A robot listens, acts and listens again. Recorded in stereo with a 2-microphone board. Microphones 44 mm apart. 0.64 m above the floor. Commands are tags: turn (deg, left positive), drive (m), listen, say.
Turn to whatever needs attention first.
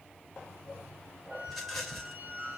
<listen/>
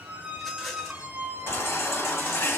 <turn deg="65"/>
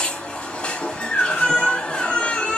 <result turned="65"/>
<turn deg="25"/>
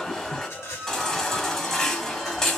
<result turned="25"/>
<turn deg="10"/>
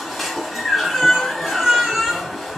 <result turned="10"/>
<say>Found it: a baby crying, straight ahead.</say>